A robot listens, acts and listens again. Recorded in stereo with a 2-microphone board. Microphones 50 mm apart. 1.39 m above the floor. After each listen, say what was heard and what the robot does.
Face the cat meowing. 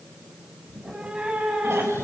The cat meowing: about 25° right or 155° right. Turn 25° right.
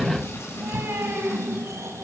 So it is at 125° right. Turn 125° right.
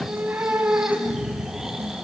The cat meowing is now 30° right. Turn 30° right.
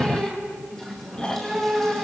Facing the cat meowing, over 4 m away.